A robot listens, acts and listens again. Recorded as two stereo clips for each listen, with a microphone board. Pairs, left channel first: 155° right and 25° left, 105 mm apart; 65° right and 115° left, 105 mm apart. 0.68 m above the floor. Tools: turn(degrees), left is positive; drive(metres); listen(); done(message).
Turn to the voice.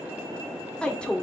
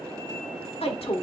turn(degrees=-80)
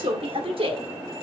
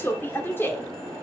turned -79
done("Facing the woman speaking.")